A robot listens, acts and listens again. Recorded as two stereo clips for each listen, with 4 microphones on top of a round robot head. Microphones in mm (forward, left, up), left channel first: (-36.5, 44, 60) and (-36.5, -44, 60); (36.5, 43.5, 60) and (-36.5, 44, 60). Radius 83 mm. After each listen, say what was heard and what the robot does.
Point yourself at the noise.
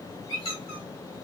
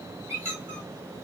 The squeak: 125° left. Turn 125° left.
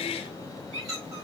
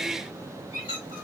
The squeak is now 25° right. Turn 25° right.
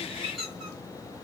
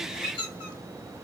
Found it: a squeak, straight ahead.